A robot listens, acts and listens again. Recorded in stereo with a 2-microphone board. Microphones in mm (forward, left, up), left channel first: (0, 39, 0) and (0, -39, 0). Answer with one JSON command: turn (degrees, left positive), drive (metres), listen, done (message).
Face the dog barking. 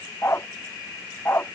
{"turn": 30}
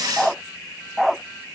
{"done": "Facing the dog barking."}